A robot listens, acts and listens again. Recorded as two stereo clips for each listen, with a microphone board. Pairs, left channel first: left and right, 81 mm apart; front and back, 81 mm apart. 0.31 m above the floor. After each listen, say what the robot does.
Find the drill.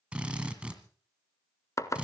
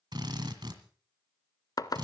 Turn 165° right.
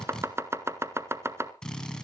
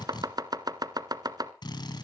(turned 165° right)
Turn 10° left.
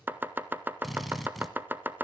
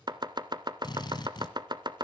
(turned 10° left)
Found it: a drill, straight ahead.